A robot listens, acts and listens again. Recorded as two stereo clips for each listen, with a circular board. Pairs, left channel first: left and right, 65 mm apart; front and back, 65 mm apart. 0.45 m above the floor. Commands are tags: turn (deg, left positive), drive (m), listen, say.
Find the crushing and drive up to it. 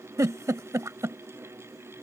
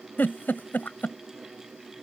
<listen/>
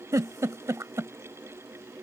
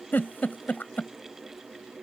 <listen/>
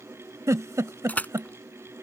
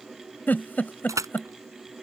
<turn deg="155"/>
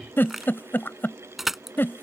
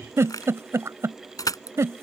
<drive m="1.0"/>
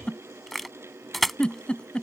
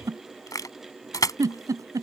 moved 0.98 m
<drive m="1.0"/>
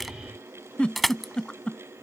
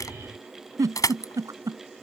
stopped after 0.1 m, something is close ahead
<say>Something is in my way. I am facing the crushing but have not reached it.</say>